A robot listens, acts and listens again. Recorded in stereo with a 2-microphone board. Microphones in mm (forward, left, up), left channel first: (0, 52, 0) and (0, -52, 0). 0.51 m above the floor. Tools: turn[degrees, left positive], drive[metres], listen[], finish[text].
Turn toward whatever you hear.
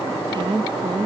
Thought: The woman speaking: about 45° right or 135° right.
Action: turn[-45]
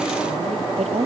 Thought: So it is at 85° right.
Action: turn[-85]
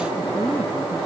Action: listen[]
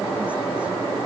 Action: listen[]
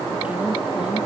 Thought: The woman speaking is now 10° right.
Action: turn[-10]
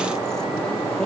Action: listen[]
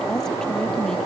Action: finish[Found it: a woman speaking, straight ahead.]